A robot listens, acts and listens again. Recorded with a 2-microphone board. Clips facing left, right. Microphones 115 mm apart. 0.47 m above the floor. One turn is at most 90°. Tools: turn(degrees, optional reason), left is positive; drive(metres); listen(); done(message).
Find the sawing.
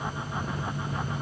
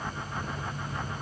listen()
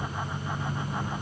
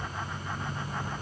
listen()
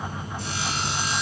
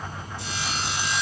turn(degrees=45, reason="The sawing: about 45° left or 135° left.")
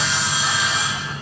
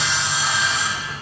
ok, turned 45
done("Found it: sawing, straight ahead.")